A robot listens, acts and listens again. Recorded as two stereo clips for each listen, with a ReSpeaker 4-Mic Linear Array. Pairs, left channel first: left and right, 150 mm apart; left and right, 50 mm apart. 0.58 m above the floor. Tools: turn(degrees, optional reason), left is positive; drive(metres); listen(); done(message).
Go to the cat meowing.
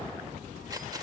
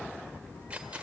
listen()
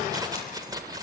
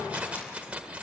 listen()
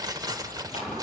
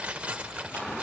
done("I can't make out a cat meowing to turn to.")